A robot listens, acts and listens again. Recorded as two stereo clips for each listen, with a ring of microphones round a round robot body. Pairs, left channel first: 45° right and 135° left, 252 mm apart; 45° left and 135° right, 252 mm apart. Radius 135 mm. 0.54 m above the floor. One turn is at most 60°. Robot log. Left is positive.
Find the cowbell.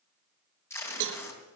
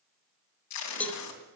note: The cowbell: 130° left.
cmd yaw +60
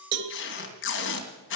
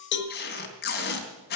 note: The cowbell is now 90° left.
cmd yaw +60
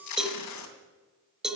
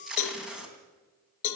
note: The cowbell is now 45° left.
cmd yaw +45
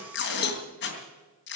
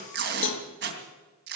end: Facing the cowbell.